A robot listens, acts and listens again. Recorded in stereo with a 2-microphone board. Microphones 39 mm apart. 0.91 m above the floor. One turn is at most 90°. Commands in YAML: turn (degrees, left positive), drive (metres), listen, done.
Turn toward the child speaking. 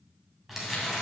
listen: true
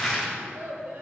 turn: -70
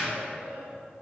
turn: -30
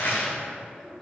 turn: 10
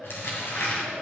done: "Found it: a child speaking, straight ahead, 2 to 4 m away."